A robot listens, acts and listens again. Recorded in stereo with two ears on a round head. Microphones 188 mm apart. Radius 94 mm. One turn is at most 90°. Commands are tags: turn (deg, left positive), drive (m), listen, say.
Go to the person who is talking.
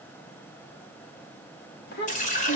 <turn deg="50"/>
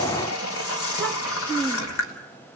<drive m="1.0"/>
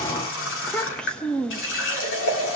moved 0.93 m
<drive m="1.0"/>
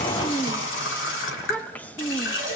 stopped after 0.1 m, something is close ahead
<turn deg="10"/>
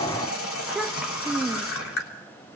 <say>Arrived at the child speaking, straight ahead.</say>